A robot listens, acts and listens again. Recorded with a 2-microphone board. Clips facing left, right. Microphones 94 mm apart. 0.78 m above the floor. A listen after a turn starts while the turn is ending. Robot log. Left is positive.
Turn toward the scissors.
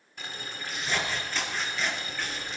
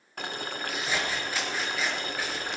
cmd yaw -30
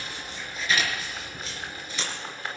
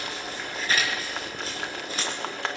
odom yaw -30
note: So it is at 140° right.
cmd yaw -140
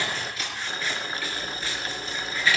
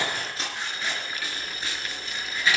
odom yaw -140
note: The scissors is now 20° right.
cmd yaw -20
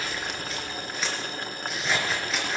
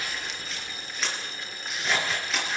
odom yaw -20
end: Found it: scissors, straight ahead.